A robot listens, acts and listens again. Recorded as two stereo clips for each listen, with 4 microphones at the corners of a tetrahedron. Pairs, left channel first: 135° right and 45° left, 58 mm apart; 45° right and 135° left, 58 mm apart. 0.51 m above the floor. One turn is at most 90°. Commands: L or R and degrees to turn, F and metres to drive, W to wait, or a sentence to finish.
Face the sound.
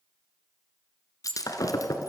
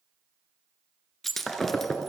R90
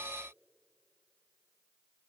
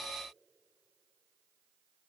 R40
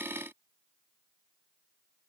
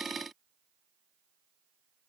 Facing where the breaking glass came from. I can't hear it now.